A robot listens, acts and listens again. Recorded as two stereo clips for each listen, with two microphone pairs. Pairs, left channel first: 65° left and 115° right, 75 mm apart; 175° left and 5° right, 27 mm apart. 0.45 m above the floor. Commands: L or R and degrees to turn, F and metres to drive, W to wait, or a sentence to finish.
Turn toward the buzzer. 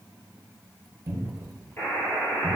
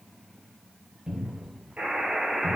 Found it: a buzzer, straight ahead.